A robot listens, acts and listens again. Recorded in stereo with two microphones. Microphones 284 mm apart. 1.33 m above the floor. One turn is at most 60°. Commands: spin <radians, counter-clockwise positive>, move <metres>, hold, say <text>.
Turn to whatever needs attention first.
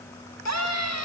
spin 1.05
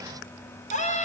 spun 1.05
spin 0.44
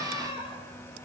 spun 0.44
spin 0.26
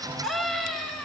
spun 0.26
say Facing the scream, over 4 m away.